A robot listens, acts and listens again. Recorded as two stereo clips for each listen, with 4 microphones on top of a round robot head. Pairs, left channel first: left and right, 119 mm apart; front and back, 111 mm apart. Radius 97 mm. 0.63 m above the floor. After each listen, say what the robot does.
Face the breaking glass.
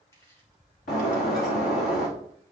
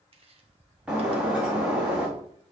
Turn 100° left.
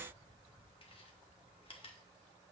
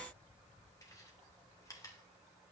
Facing where the breaking glass came from. I can't hear it now.